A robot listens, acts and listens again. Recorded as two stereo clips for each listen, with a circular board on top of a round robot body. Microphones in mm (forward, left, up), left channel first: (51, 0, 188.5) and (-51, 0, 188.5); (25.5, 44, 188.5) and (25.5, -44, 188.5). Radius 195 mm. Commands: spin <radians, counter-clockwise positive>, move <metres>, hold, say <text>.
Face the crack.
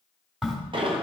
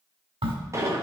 spin -1.66
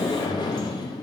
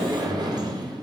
say Facing where the crack came from. I can't hear it now.